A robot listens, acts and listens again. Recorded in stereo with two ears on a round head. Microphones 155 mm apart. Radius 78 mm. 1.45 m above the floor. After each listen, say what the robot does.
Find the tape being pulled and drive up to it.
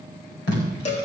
Turn 75° left.
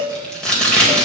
Drive 1.0 m forward.
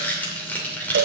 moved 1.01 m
Turn 10° left.
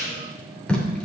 Drive 1.0 m forward.
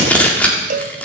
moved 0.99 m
Turn 10° left.
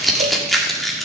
Drive 1.0 m forward.
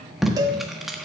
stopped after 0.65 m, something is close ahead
Arrived at the tape being pulled, straight ahead.